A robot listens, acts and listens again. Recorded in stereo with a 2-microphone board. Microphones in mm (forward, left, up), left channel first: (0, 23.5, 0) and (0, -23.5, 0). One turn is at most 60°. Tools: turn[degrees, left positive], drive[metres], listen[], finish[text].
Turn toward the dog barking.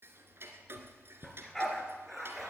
Action: turn[30]
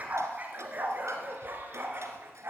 Thought: So it is at 50° right.
Action: turn[-50]
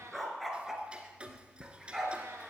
Action: finish[Found it: a dog barking, straight ahead.]